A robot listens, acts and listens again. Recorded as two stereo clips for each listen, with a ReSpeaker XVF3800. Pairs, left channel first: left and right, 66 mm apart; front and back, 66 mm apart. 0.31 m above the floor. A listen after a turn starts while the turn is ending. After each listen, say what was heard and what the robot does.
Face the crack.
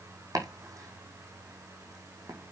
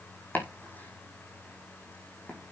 Keep listening.
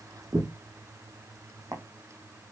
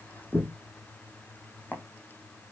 Keep listening.
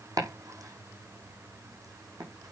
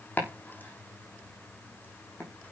I can't make out a crack to turn to.